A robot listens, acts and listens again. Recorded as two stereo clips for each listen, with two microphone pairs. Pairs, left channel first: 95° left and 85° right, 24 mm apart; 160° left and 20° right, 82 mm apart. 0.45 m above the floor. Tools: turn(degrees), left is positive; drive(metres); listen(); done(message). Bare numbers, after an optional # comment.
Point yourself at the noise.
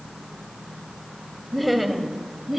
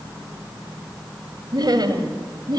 done("Facing the laughter.")